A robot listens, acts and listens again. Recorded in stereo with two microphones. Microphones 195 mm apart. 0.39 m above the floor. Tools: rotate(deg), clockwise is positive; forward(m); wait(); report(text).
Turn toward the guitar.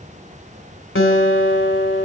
rotate(-90)
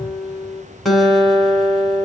report("Found it: a guitar, straight ahead.")